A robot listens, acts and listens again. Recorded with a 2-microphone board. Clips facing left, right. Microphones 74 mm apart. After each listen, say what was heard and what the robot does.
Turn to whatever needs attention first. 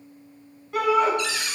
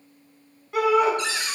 Turn 30° right.
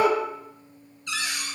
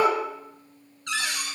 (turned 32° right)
So it is at 145° right. Turn 145° right.
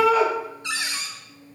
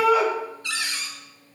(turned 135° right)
The shout is now 10° right. Turn 10° right.
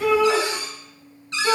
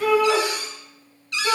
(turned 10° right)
Found it: a shout, straight ahead, 2 to 4 m away.